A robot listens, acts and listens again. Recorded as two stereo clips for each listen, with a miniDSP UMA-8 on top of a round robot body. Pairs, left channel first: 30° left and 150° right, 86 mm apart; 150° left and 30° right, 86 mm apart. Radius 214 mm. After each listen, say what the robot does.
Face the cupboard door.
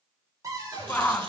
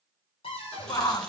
Turn 155° left.
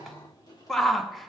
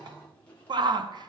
Keep listening.
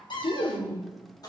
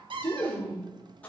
Found it: a cupboard door, straight ahead, 2 to 4 m away.